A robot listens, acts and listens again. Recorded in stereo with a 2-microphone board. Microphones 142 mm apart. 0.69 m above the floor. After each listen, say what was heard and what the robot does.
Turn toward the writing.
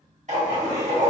The writing: about 55° right or 125° right. Turn 55° right.
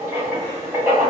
So it is at 20° right. Turn 20° right.
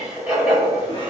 Found it: writing, straight ahead, 1 to 2 m away.